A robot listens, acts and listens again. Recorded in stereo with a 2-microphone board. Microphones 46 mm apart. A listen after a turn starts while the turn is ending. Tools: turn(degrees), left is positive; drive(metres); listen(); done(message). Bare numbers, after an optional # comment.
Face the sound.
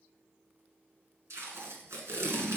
turn(-90)
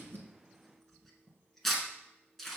done("Found it: tape being pulled, straight ahead, 1 to 2 m away.")